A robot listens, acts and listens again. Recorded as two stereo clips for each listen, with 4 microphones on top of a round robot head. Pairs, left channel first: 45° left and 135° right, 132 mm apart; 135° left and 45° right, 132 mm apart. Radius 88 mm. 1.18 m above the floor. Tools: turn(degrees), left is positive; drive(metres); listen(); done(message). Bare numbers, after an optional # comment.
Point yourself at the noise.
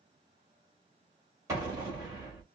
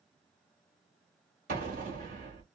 # The explosion: 65° right.
turn(-65)
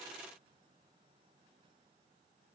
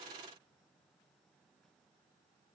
done("I heard an explosion from this way, but can't make it out now.")